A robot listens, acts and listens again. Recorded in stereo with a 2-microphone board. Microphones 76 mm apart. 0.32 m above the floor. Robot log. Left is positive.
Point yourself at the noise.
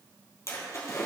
note: The splash: about 45° left or 135° left.
cmd yaw +45
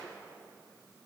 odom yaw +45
cmd idle
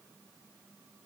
end: I heard a splash, but can't make it out now. It was about straight ahead or 90° left.